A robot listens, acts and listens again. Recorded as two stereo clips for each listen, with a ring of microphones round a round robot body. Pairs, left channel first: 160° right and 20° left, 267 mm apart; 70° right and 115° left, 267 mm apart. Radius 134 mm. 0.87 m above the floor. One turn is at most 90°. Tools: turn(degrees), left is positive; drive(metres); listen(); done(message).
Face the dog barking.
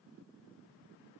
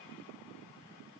listen()
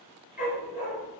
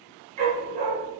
turn(degrees=90)
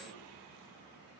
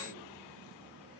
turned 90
turn(degrees=50)
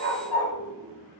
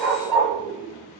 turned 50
turn(degrees=25)
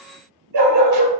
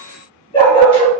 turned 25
done("Facing the dog barking.")